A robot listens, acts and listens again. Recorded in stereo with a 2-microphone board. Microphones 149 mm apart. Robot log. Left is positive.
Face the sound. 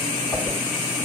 note: The whoosh: about 20° left or 160° left.
cmd yaw +20
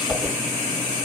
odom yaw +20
end: Found it: a whoosh, straight ahead.